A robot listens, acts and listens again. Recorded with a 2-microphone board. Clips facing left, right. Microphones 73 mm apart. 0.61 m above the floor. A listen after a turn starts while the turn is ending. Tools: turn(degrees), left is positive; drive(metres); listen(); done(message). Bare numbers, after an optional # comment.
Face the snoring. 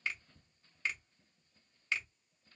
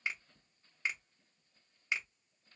listen()
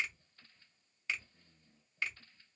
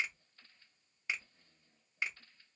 listen()
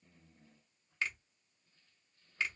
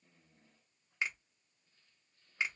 done("I can't make out snoring to turn to.")